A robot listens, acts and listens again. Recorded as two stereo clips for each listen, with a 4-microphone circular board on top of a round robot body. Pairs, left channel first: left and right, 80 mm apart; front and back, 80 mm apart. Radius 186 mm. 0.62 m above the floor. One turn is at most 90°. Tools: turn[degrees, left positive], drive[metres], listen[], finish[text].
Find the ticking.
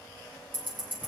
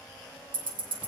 Thought: The ticking: 160° right.
Action: turn[-90]
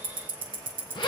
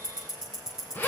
Thought: The ticking is now 95° right.
Action: turn[-90]
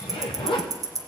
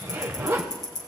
Thought: The ticking is now 40° right.
Action: turn[-40]
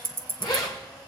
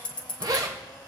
Thought: The ticking is now 25° right.
Action: turn[-25]
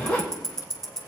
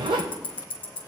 Action: finish[Found it: ticking, straight ahead, 1 to 2 m away.]